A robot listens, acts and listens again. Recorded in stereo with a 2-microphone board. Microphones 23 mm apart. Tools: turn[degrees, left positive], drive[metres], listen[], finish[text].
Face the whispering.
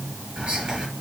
Thought: The whispering: about 55° right or 125° right.
Action: turn[-55]
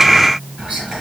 Thought: So it is at 60° right.
Action: turn[-60]
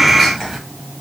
Action: finish[Facing the whispering, 1 to 2 m away.]